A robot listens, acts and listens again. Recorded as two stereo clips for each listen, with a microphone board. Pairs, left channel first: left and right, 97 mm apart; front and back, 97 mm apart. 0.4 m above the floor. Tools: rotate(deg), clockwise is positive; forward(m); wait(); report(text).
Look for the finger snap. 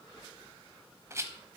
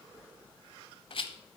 wait()
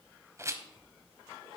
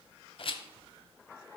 wait()
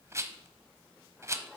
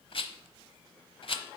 report("I can't make out a finger snap to turn to.")